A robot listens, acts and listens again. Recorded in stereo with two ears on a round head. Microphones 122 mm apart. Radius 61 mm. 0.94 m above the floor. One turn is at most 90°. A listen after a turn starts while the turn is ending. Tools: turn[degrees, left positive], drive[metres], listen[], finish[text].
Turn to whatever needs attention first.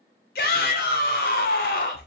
Action: turn[90]
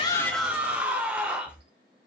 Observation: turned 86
Thought: So it is at 10° right.
Action: turn[-10]
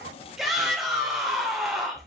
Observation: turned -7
Action: finish[Facing the shout, 2 to 4 m away.]